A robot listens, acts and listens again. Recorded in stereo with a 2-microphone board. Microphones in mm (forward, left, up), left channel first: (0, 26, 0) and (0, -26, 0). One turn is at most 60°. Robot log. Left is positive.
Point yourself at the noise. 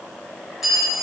cmd yaw +30
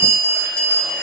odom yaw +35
note: So it is at 145° left.
cmd yaw +60
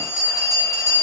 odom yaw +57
note: The bell is now 90° left.
cmd yaw +60
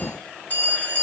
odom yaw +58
note: The bell is now 30° left.
cmd yaw +30
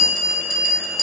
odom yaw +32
end: Found it: a bell, straight ahead, 2 to 4 m away.